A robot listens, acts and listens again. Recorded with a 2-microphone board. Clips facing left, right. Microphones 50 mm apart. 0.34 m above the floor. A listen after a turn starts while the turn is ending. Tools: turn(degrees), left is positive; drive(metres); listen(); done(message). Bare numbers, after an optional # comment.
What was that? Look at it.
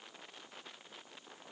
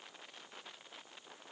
listen()
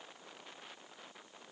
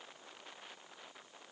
listen()
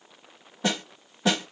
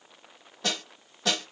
# The snare drum: about 15° left or 165° left.
turn(15)
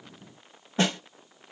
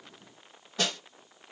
# So it is at 155° left.
turn(155)
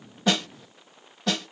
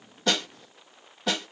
done("Facing the snare drum.")